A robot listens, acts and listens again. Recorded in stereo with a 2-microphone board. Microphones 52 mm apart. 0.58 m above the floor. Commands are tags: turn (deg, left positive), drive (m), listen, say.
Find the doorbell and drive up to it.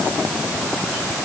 <listen/>
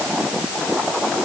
<listen/>
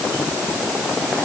<say>I can't make out a doorbell to turn to.</say>